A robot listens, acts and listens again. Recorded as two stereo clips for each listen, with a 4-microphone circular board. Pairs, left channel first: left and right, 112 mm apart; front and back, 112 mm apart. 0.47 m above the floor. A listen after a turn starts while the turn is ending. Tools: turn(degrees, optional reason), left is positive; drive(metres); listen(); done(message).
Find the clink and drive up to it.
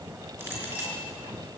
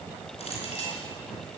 turn(degrees=-20, reason="The clink: 20° right.")
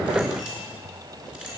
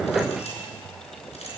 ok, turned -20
turn(degrees=-10, reason="The clink is now 10° right.")
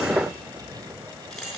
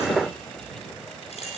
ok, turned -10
drive(metres=1.0)
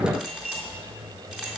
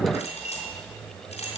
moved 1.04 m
drive(metres=1.0)
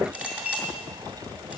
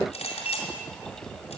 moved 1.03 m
turn(degrees=-10, reason="The clink is now 10° right.")
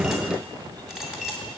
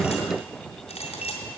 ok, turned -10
drive(metres=1.0)
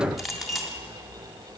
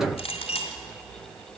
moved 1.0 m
drive(metres=1.0)
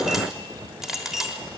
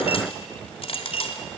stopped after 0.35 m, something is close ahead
done("Arrived at the clink, straight ahead.")